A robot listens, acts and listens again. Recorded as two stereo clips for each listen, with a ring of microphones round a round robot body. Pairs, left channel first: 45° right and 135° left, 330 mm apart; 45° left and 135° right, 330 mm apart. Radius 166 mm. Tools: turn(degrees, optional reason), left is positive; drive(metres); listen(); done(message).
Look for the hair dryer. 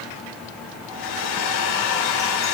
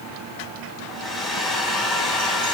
turn(degrees=-45, reason="The hair dryer: 45° right.")
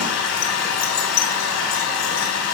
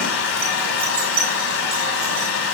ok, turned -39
done("Found it: a hair dryer, straight ahead, over 4 m away.")